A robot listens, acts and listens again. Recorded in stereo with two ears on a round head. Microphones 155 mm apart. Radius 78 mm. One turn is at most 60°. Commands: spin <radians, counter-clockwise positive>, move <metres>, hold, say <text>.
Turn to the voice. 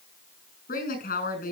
spin 0.87
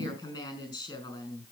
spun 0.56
spin 0.35
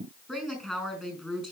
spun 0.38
say Found it: a woman speaking, straight ahead, over 4 m away.